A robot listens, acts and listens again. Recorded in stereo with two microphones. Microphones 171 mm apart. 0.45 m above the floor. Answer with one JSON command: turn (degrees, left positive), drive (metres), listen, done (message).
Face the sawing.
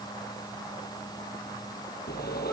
{"turn": 65}
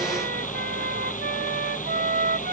{"turn": 50}
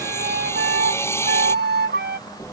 {"turn": 15}
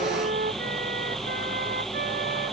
{"done": "Facing the sawing."}